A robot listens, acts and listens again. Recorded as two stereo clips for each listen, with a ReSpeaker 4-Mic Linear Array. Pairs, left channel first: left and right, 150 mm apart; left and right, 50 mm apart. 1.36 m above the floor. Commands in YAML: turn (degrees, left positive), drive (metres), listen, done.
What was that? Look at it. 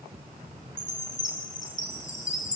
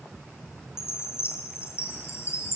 turn: 55
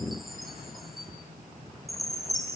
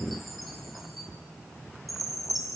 done: "Facing the chime, over 4 m away."